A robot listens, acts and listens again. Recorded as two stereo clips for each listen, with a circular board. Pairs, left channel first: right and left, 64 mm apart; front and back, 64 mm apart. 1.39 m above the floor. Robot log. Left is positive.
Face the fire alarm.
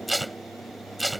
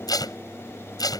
cmd idle
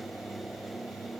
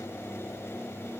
cmd idle
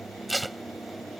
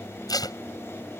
end: I can't make out a fire alarm to turn to.